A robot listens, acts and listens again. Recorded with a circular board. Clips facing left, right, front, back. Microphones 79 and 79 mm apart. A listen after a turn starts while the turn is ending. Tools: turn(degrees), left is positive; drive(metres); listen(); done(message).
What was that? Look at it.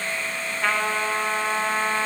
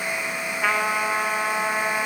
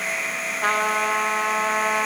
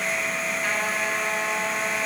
turn(degrees=-10)
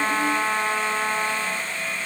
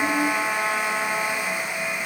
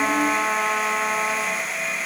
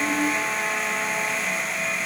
done("Facing the trumpet, 1 to 2 m away.")